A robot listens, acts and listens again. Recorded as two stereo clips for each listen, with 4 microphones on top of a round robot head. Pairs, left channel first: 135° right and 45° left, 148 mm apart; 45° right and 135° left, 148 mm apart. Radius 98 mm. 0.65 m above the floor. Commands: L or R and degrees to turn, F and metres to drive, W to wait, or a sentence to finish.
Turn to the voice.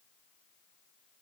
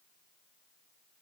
W
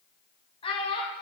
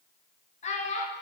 R80
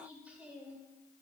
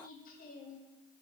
R35
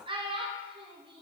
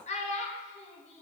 Facing the child speaking, under 1 m away.